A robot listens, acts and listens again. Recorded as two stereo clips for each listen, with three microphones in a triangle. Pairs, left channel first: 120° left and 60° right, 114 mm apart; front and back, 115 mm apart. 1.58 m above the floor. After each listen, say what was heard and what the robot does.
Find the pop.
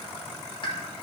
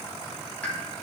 The pop: 80° left. Turn 80° left.
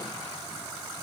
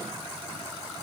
I heard a pop from this way, but can't make it out now.